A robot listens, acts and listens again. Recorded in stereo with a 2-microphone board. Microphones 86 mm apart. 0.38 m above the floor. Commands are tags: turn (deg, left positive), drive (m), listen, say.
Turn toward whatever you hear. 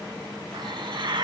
<turn deg="-60"/>
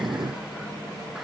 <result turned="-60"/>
<listen/>
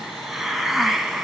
<say>Found it: a hiss, straight ahead.</say>